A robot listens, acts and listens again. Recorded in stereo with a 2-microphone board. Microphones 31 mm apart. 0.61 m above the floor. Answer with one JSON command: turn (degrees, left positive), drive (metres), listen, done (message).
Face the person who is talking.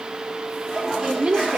{"turn": -30}
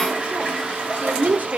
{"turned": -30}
{"turn": -120}
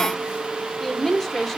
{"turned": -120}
{"done": "Facing the woman speaking."}